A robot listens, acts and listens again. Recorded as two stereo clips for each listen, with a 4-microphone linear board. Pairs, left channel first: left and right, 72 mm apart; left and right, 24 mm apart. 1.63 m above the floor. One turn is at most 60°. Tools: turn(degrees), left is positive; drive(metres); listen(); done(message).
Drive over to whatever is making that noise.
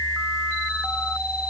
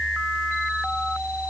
listen()
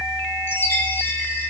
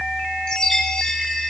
turn(degrees=35)
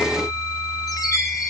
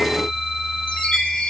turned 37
turn(degrees=60)
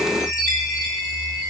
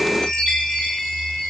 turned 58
turn(degrees=50)
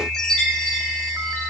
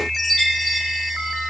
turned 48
drive(metres=1.0)
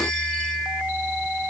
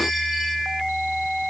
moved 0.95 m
listen()
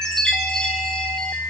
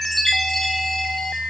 turn(degrees=10)
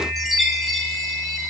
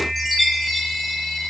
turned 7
drive(metres=1.0)
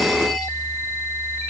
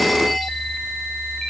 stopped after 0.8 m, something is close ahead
listen()
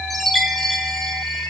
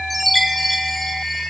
done("Arrived at the chime, straight ahead.")